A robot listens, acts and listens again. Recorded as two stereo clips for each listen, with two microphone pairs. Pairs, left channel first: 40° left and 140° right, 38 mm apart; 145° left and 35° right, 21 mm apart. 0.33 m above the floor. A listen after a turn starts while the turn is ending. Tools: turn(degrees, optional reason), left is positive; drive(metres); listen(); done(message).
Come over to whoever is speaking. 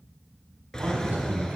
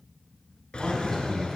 turn(degrees=-140, reason="The man speaking: 140° right.")
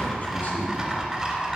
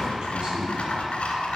listen()
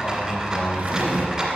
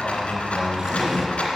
turn(degrees=15, reason="The man speaking is now 15° left.")
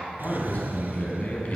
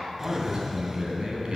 drive(metres=1.0)
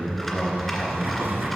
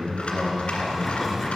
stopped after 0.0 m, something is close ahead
turn(degrees=-10, reason="The man speaking is now 10° right.")
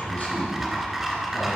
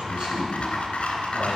done("Something is in my way. I am facing the man speaking but have not reached it.")